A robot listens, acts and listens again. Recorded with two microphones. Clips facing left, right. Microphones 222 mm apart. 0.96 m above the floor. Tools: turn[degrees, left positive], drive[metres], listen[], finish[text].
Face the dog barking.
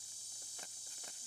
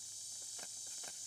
Action: listen[]
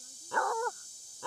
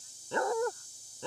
Thought: The dog barking: about 20° right or 160° right.
Action: turn[-20]
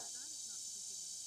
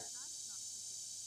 Action: listen[]
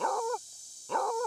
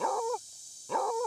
Action: finish[Found it: a dog barking, straight ahead.]